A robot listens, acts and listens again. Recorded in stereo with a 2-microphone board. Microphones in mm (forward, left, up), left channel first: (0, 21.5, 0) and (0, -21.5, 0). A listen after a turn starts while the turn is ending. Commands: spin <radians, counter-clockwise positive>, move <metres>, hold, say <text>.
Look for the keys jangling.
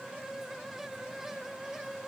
hold
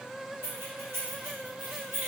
spin -1.13
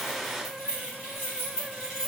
spin -0.44
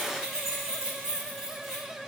spin -0.17
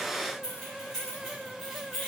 say Facing the keys jangling.